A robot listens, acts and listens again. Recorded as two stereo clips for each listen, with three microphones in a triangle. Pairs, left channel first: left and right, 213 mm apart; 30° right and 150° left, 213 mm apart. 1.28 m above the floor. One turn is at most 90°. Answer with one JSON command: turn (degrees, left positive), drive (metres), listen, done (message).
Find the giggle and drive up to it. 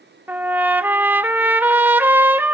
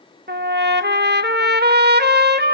{"listen": true}
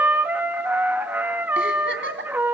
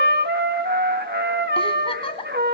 {"turn": -90}
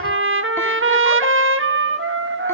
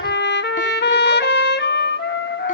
{"listen": true}
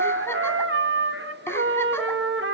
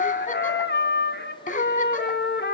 {"listen": true}
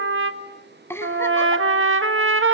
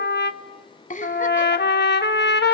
{"turn": 15}
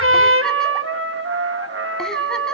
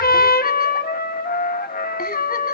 {"listen": true}
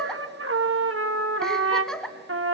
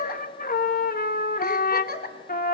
{"drive": 1.0}
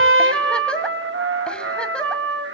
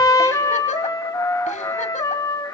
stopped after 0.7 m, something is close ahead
{"listen": true}
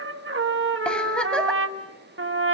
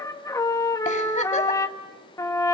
{"listen": true}
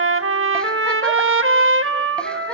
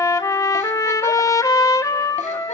{"done": "I heard a giggle from this way, but can't make it out now. I did not reach it."}